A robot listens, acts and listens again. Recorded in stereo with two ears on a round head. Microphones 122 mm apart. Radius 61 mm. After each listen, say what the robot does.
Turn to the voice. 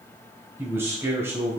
Turn 20° right.
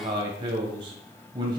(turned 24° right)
Turn 140° right.
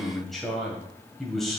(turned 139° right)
Found it: a man speaking, straight ahead.